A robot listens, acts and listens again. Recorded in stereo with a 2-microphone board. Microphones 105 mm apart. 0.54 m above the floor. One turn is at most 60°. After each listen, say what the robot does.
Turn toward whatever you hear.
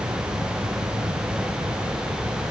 Keep listening.
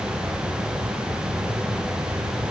Keep listening.
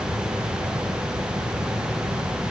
I can't make out anything.